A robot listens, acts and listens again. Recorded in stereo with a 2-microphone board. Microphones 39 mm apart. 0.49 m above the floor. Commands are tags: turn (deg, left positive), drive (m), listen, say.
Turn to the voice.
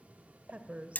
<turn deg="-35"/>
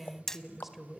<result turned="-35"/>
<say>Found it: a woman speaking, straight ahead.</say>